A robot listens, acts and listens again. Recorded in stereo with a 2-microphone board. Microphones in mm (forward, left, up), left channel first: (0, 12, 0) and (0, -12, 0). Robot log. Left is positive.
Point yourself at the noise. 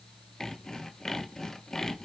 note: The sawing: about 20° left or 160° left.
cmd yaw +20
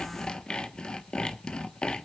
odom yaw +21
note: So it is at 140° left.
cmd yaw +140
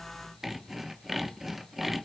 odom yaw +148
note: The sawing is now 10° right.
cmd yaw -10
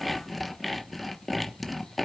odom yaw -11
end: Facing the sawing.